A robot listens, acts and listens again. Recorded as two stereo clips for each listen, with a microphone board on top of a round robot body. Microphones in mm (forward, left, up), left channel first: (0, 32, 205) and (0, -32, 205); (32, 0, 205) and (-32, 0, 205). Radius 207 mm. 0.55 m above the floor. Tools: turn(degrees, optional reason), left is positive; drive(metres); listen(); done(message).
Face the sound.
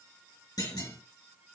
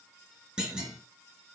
turn(degrees=105, reason="The clunk: 105° left.")
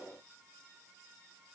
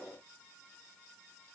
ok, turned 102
done("Facing where the clunk came from. I can't hear it now.")